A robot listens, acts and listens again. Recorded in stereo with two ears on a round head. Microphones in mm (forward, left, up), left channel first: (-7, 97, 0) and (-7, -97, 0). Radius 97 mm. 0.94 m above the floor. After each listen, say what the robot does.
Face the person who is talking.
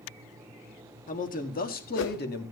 Turn 50° left.
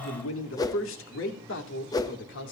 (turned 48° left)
Turn 55° left.
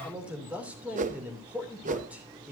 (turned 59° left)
Facing the man speaking.